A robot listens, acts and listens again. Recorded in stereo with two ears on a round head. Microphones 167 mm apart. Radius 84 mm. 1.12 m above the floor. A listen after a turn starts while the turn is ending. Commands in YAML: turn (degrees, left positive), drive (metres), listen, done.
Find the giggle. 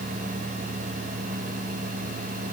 listen: true
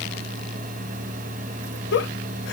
turn: 60
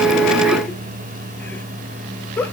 turn: 10
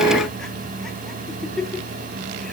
done: "Facing the giggle, 1 to 2 m away."